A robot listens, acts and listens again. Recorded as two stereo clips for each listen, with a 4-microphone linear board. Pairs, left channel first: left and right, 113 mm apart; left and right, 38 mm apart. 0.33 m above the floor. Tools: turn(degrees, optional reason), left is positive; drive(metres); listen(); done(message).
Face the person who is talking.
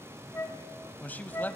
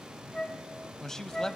turn(degrees=30)
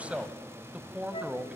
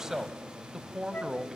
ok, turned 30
turn(degrees=-15, reason="So it is at 15° right.")
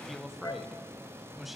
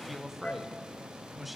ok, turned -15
done("Facing the man speaking, 1 to 2 m away.")